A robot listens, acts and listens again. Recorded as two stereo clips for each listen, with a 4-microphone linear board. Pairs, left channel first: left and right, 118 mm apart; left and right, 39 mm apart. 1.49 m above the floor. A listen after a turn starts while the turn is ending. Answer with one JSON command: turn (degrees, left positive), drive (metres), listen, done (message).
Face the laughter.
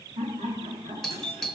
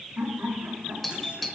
{"turn": -90}
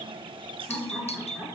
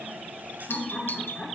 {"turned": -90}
{"done": "Facing the laughter, over 4 m away."}